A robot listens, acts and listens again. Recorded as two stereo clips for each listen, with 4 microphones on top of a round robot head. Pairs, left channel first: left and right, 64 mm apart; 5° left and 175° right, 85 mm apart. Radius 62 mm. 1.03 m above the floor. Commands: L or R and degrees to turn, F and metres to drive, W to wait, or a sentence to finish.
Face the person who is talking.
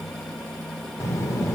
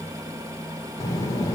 L50
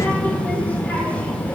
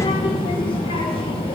L20
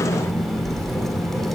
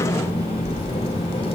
Found it: a child speaking, straight ahead, 1 to 2 m away.